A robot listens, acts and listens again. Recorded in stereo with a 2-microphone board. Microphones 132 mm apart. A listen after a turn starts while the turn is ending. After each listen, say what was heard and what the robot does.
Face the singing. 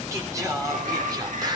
The singing: about 35° right or 145° right. Turn 35° right.
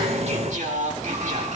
So it is at 105° right. Turn 105° right.
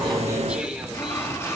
Keep listening.
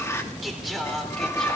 Facing the singing.